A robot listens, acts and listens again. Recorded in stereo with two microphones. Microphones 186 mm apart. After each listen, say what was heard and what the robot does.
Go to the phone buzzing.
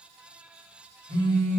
The phone buzzing: about 65° right or 115° right. Turn 65° right.
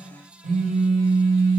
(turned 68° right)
So it is at 45° right. Turn 45° right.
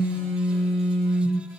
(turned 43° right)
Drive 1.0 m forward.
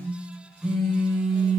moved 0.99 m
Drive 1.0 m forward.
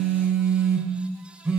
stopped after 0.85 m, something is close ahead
Arrived at the phone buzzing, straight ahead.